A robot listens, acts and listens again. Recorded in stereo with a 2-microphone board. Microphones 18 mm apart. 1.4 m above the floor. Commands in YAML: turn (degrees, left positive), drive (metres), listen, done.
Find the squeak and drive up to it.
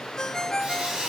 turn: -60
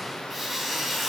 drive: 1.0
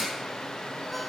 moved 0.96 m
listen: true
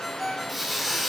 drive: 1.0
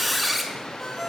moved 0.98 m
drive: 1.0
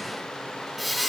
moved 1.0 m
drive: 1.0
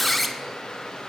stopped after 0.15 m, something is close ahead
turn: 10
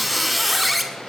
done: "Arrived at the squeak, straight ahead."